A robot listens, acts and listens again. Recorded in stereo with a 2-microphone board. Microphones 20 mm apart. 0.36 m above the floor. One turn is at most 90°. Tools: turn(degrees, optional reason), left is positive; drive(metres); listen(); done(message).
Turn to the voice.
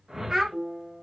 turn(degrees=-40, reason="The child speaking: about 40° right or 140° right.")
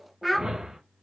done("Facing the child speaking.")